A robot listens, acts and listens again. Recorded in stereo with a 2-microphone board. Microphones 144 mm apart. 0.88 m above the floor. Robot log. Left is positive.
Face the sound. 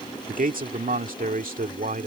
note: The man speaking: about 75° right or 105° right.
cmd yaw -75
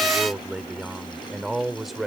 end: Found it: a man speaking, straight ahead.